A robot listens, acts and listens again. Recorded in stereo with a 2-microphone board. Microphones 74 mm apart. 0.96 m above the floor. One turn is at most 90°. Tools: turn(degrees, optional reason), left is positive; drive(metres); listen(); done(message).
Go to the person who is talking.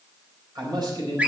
turn(degrees=-70, reason="The man speaking: about 70° right or 110° right.")
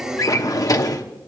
turn(degrees=-40, reason="So it is at 40° right.")
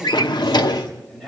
drive(metres=1.0)
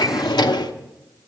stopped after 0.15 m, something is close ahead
listen()
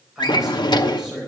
done("Something is in my way. I am facing the man speaking but have not reached it.")